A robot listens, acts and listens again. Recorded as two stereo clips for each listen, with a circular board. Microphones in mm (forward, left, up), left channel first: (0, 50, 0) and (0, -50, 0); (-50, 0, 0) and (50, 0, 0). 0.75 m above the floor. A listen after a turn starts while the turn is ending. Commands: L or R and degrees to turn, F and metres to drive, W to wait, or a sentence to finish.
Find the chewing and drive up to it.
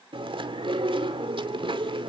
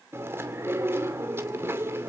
R65
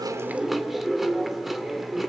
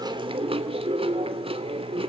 F1.0
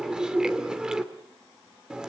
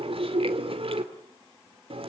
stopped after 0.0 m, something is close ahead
R10
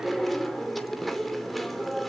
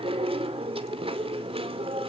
Blocked. The chewing is further on, straight ahead.